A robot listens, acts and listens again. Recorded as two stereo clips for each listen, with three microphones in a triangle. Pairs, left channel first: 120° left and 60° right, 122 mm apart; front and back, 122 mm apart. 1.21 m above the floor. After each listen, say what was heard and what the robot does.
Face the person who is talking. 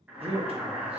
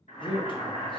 The man speaking: 40° right. Turn 40° right.
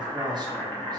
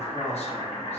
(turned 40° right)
The man speaking is now 10° right. Turn 10° right.
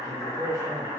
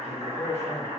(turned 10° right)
Facing the man speaking.